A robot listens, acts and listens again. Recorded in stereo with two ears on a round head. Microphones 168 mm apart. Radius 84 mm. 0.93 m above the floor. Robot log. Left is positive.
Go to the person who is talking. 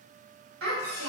cmd yaw -90
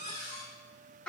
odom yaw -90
cmd fwd 1.0
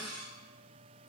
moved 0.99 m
note: The child speaking is now 20° left.
cmd yaw +20
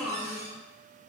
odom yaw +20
cmd fwd 1.0
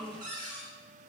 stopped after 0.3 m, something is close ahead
end: I am next to the child speaking.